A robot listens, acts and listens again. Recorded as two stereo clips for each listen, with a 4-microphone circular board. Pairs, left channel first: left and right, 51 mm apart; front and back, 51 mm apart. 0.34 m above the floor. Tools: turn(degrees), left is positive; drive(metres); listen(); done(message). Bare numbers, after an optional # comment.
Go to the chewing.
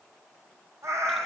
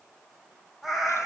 listen()
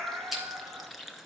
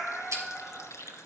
# The chewing: 175° right.
turn(-175)
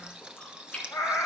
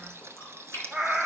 # The chewing is now 25° left.
turn(25)
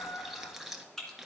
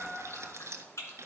# The chewing is now 10° left.
turn(10)
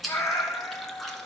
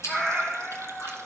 drive(1.0)
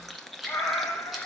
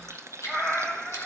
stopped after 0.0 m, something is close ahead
done("Blocked. The chewing is further on, straight ahead.")